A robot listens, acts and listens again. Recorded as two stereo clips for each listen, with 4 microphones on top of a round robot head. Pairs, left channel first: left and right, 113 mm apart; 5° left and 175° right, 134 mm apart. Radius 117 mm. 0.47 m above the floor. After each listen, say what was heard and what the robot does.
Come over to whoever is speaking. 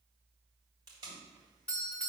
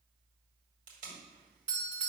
Keep listening.
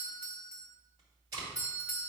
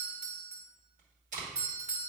Keep listening.
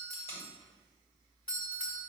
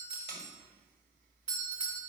I can't make out anyone speaking, only a doorbell and tape being pulled.